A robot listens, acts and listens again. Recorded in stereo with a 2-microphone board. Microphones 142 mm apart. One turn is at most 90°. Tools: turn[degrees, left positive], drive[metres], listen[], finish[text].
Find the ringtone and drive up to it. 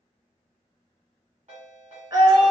Thought: The ringtone: about 65° right or 115° right.
Action: turn[-65]
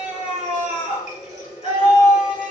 Action: listen[]
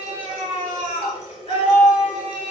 Action: listen[]
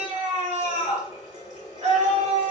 Action: finish[I heard a ringtone, but can't make it out now. It was about straight ahead or 50° right. I did not reach it.]